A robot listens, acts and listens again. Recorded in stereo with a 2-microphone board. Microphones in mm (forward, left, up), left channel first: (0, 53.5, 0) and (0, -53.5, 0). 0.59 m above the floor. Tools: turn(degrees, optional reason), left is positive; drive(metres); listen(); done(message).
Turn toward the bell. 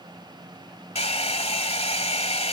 listen()
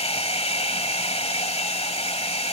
listen()
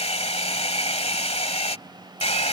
done("I can't make out a bell to turn to.")